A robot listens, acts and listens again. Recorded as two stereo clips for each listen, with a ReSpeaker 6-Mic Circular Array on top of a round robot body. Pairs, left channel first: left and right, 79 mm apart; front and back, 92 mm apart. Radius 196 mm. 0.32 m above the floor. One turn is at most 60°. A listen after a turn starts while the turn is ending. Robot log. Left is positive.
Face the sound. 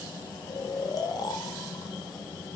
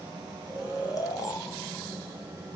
note: The snoring: 50° left.
cmd yaw +50
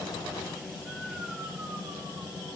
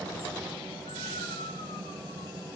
cmd idle
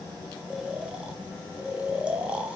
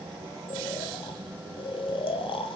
note: The snoring is now 15° right.
cmd yaw -15
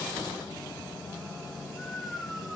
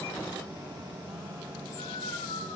end: Found it: snoring, straight ahead.